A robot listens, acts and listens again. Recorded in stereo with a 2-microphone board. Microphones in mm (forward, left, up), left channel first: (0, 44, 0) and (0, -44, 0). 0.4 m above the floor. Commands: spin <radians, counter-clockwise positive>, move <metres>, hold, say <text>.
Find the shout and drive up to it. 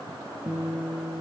hold
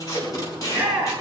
spin -0.52
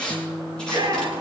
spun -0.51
spin -2.36
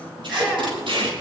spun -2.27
hold
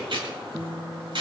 hold
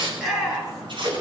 move 1.0
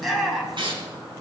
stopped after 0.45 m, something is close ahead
say Something is in my way. I am facing the shout but have not reached it.